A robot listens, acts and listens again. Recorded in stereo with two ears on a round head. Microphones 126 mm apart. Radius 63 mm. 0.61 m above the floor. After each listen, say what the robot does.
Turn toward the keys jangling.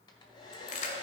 Turn 55° left.
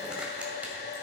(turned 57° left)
Keep listening.
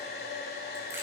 Keep listening.
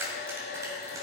Turn 20° right.
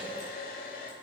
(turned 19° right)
Keep listening.
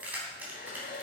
Turn 15° right.
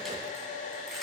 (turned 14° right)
Keep listening.
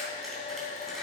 Keep listening.
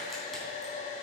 Facing where the keys jangling came from. I can't hear it now.